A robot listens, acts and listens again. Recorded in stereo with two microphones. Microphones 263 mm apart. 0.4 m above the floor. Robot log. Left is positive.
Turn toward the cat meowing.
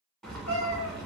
note: The cat meowing: about 70° right or 110° right.
cmd yaw -70
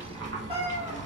note: So it is at 20° right.
cmd yaw -20
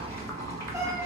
cmd idle
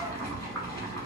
cmd idle
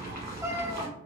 note: The cat meowing is now 10° right.
cmd yaw -10
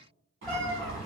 end: Found it: a cat meowing, straight ahead, under 1 m away.